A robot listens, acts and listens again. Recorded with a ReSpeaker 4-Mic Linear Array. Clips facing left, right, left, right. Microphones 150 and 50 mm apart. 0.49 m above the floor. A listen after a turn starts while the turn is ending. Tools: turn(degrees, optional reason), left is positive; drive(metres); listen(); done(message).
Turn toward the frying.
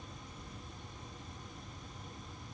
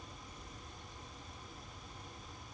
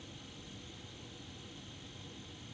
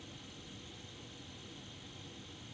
listen()
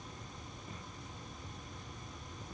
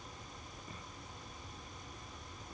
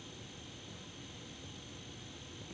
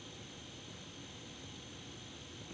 listen()
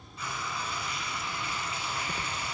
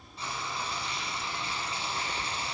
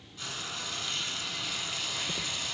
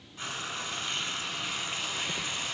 turn(degrees=-30, reason="The frying: about 30° right or 150° right.")
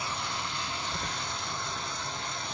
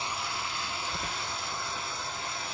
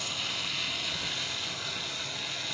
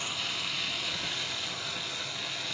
done("Facing the frying, under 1 m away.")